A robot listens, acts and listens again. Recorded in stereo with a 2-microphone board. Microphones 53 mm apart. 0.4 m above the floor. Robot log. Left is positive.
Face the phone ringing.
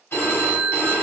note: The phone ringing: about 45° left or 135° left.
cmd yaw +45
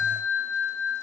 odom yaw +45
note: So it is at 75° left.
cmd yaw +75
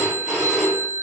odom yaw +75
end: Found it: a phone ringing, straight ahead.